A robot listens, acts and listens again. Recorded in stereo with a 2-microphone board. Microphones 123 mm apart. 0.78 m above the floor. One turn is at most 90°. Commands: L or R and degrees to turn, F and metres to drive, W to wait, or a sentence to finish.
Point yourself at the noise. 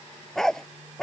L30
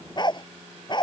L90
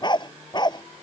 L35
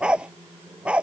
R10
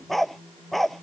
Facing the dog barking.